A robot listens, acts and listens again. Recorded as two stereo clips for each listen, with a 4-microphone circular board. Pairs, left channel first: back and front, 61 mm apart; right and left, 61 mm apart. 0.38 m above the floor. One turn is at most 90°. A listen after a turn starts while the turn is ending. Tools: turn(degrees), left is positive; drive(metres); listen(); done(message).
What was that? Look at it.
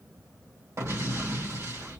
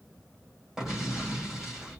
turn(degrees=10)
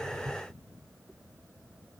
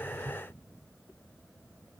done("I heard an explosion from this way, but can't make it out now.")